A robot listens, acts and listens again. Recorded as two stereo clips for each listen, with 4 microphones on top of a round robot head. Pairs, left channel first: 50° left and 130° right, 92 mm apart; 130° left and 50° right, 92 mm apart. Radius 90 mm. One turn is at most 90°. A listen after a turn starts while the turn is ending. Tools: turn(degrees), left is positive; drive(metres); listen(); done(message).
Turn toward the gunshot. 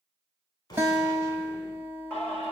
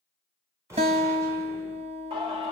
done("Found it: a gunshot, straight ahead.")